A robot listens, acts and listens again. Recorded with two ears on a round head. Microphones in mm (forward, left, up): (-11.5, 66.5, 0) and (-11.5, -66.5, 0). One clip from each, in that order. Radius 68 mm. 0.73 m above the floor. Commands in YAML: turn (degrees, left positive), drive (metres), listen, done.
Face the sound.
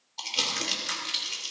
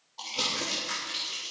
turn: 55
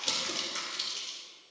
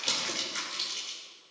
done: "Facing the crumpling."